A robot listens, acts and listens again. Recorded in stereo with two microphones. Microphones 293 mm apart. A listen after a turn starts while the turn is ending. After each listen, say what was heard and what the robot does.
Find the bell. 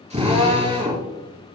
Keep listening.
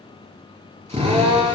Keep listening.
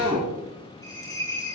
Turn 30° left.
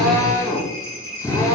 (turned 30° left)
So it is at 135° left. Turn 135° left.
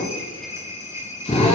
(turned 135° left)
The bell is now 10° right. Turn 10° right.
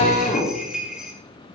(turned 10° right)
Found it: a bell, straight ahead.